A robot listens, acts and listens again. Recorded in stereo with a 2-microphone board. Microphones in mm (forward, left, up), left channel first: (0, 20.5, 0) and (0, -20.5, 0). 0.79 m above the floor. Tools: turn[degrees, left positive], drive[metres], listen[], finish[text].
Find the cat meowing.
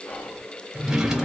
Action: listen[]
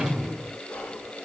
Action: listen[]
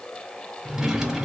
Action: finish[I can't make out a cat meowing to turn to.]